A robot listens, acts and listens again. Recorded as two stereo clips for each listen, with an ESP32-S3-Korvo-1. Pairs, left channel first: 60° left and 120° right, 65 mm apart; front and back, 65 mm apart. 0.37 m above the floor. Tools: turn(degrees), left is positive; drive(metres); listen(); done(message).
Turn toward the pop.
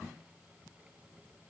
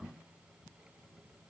listen()
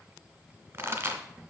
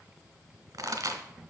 turn(degrees=-160)
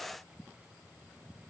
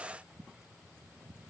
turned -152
turn(degrees=-10)
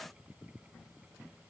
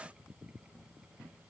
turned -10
done("Facing where the pop came from. I can't hear it now.")